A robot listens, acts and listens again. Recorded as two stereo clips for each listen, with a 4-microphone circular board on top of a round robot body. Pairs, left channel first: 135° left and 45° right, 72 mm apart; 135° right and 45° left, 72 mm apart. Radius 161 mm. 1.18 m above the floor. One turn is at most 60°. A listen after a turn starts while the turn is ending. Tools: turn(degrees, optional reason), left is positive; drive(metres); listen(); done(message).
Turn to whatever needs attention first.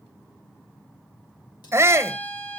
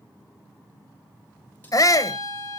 turn(degrees=-60, reason="The shout: 100° right.")
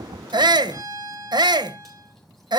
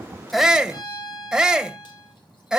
turn(degrees=-35, reason="The shout is now 35° right.")
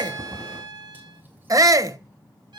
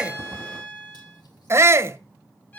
done("Found it: a shout, straight ahead.")